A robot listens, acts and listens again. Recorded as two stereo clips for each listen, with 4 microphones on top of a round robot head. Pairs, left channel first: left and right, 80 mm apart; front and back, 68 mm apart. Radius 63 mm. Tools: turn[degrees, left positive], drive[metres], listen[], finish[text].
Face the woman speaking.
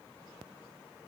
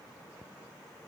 Action: listen[]
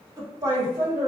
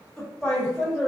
Thought: The woman speaking: 105° right.
Action: turn[-105]
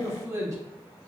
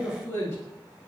Thought: The woman speaking is now 50° right.
Action: turn[-50]
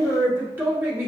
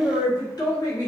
Thought: The woman speaking is now 30° right.
Action: turn[-30]
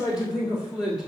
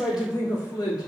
Action: finish[Facing the woman speaking.]